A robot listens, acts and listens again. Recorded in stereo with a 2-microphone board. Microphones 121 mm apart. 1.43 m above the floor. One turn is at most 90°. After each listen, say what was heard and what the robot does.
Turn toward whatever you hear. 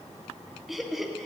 Turn 30° right.
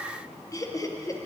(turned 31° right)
So it is at 25° left. Turn 25° left.
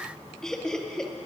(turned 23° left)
Found it: laughter, straight ahead.